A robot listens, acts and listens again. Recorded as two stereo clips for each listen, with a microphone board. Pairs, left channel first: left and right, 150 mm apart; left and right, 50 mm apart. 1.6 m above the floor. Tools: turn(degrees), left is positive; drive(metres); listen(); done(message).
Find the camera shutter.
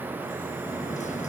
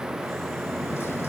listen()
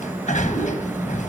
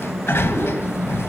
listen()
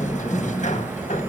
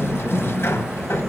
done("I can't make out a camera shutter, only a sliding door.")